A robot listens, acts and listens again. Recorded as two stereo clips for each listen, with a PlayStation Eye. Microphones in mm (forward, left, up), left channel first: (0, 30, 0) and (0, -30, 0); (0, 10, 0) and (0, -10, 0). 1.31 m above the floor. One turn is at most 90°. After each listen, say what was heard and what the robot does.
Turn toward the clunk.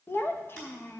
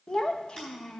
Keep listening.
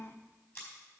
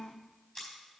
Keep listening.
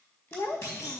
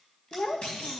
Turn 90° left.
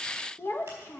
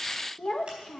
I heard a clunk from this way, but can't make it out now.